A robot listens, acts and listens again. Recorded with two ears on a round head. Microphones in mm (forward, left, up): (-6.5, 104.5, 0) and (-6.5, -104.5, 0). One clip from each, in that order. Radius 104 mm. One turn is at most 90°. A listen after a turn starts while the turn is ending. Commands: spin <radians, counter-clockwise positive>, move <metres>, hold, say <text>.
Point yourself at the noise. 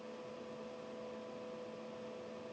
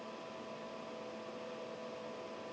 hold
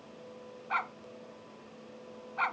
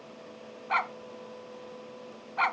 spin -0.52
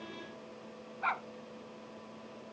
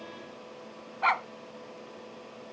spin -1.57
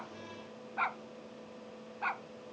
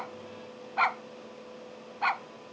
spin -0.87
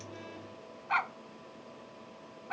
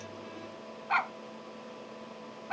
spin -0.17
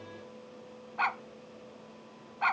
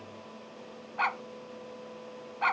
say Facing the dog barking.